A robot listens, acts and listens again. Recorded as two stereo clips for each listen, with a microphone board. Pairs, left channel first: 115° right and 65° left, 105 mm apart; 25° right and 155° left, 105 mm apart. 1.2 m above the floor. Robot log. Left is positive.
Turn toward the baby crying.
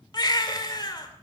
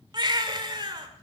note: The baby crying: 160° right.
cmd yaw -160
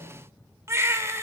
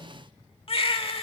end: Facing the baby crying.